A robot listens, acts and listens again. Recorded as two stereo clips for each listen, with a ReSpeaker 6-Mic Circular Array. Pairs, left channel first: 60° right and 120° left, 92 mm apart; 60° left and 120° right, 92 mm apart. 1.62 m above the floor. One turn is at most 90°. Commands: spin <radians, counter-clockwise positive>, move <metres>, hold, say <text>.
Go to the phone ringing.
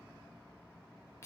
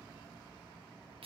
hold
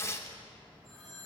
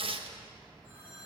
spin 0.61
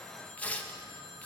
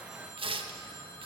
spin 0.44
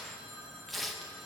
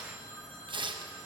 move 1.0
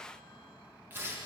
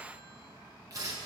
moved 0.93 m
hold
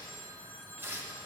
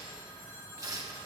move 1.0
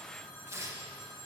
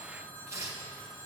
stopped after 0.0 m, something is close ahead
say Blocked. The phone ringing is further on, straight ahead.